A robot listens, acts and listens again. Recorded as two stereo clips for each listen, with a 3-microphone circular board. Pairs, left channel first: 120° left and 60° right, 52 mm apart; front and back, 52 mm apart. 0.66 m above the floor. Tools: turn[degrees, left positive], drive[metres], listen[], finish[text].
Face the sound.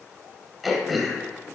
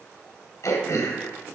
Thought: The throat clearing: 25° left.
Action: turn[25]
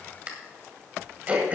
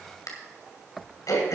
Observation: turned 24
Action: finish[Found it: throat clearing, straight ahead.]